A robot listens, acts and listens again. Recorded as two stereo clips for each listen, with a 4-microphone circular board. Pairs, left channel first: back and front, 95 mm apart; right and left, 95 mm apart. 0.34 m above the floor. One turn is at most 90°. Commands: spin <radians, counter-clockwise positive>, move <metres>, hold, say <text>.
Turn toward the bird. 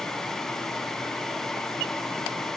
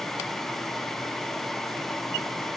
hold
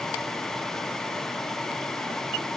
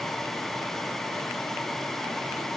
hold
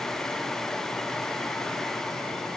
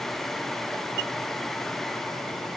say I can't make out a bird.